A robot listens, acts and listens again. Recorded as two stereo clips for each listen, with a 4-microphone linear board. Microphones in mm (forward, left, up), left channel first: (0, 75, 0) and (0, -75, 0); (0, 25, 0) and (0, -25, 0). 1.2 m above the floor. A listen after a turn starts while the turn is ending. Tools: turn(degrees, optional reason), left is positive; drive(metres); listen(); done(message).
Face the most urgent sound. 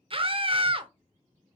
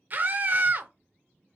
turn(degrees=-40, reason="The scream: about 40° right or 140° right.")
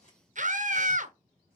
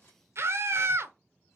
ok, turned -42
turn(degrees=-90, reason="So it is at 90° right.")
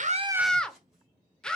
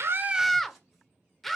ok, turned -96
done("Found it: a scream, straight ahead, under 1 m away.")